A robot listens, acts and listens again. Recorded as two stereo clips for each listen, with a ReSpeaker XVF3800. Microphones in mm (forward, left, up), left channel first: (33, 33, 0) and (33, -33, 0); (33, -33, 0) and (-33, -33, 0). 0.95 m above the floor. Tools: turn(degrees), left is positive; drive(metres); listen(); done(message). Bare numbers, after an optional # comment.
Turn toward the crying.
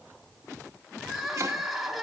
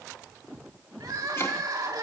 # The crying: 175° right.
turn(-175)
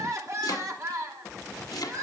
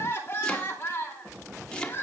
# The crying is now 50° right.
turn(-50)
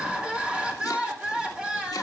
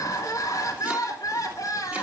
# The crying is now 15° right.
turn(-15)
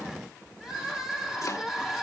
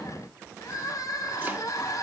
done("Found it: crying, straight ahead.")